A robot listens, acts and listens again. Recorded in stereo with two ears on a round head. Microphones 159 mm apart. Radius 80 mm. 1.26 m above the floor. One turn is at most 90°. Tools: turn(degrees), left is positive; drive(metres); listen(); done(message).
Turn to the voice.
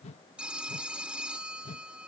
listen()
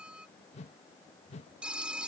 listen()
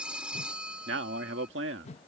turn(degrees=-70)
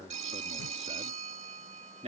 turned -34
turn(degrees=-35)
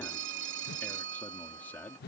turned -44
turn(degrees=10)
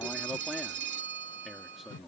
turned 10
done("Facing the man speaking.")